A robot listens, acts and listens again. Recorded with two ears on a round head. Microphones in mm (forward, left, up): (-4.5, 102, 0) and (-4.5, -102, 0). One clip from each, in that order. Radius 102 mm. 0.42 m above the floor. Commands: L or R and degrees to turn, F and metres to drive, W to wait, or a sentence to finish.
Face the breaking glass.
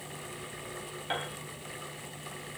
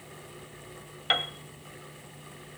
W
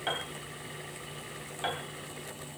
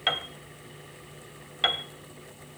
W
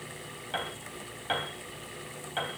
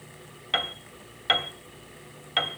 I can't make out breaking glass to turn to.